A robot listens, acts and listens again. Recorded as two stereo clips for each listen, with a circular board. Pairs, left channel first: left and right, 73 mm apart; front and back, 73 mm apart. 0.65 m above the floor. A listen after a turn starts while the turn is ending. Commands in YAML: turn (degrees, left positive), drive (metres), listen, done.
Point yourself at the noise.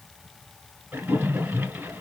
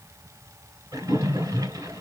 turn: -150
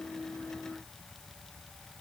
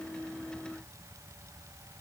done: "I heard a splash from this way, but can't make it out now."